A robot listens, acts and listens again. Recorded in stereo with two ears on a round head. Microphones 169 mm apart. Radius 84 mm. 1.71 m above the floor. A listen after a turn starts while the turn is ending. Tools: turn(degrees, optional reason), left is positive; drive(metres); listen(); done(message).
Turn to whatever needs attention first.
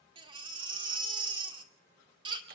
turn(degrees=-25, reason="The baby crying: about 25° right or 155° right.")
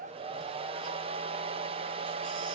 listen()
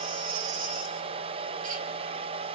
turn(degrees=-125, reason="So it is at 125° right.")
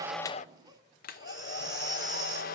turn(degrees=-25, reason="The baby crying is now 25° right.")
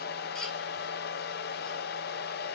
listen()
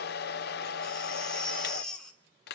done("Found it: a baby crying, straight ahead.")